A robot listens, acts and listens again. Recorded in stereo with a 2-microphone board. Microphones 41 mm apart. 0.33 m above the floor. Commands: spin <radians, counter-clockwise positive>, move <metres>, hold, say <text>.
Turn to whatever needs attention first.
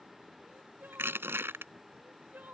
spin -0.87
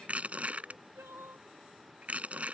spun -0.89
spin -1.40
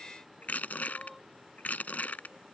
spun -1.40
hold
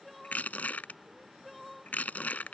say Found it: crying, straight ahead.